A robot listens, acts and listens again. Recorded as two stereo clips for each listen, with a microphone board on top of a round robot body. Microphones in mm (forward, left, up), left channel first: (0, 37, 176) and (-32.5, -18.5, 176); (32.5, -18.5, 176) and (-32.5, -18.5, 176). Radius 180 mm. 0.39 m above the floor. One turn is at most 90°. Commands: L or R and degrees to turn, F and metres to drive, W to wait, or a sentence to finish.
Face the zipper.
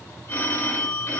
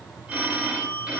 W
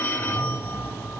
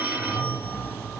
R60
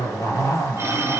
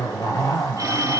L20
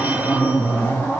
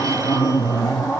Found it: a zipper, straight ahead.